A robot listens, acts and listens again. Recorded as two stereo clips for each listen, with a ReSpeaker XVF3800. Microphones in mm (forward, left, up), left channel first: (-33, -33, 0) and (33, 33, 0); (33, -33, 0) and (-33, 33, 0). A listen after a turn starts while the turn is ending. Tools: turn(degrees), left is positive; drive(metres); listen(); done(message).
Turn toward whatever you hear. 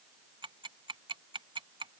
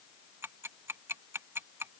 turn(degrees=70)
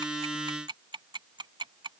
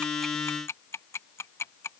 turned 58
turn(degrees=15)
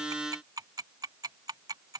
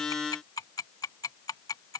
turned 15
done("Facing the ticking.")